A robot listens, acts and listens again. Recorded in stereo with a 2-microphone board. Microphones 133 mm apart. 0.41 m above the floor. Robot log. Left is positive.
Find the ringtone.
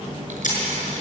cmd idle
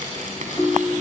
note: The ringtone: about 20° left or 160° left.
cmd yaw +20
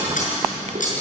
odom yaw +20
cmd idle
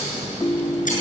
note: So it is at 140° left.
cmd yaw +140
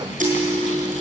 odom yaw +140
note: The ringtone is now 25° right.
cmd yaw -25
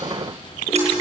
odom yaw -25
cmd idle
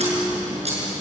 cmd idle
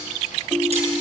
end: Facing the ringtone, under 1 m away.